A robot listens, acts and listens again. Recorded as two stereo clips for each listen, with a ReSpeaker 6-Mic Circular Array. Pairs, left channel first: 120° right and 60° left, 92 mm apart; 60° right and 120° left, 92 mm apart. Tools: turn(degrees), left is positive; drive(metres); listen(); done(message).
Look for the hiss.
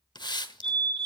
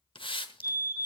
turn(degrees=-85)
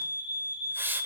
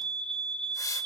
turn(degrees=-10)
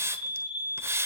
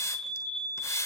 done("Found it: a hiss, straight ahead.")